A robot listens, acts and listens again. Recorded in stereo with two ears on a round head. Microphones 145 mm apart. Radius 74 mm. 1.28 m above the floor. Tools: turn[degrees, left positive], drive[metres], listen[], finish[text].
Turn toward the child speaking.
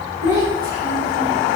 Thought: The child speaking: about 30° left or 150° left.
Action: turn[30]
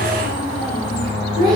Action: finish[Found it: a child speaking, straight ahead, 2 to 4 m away.]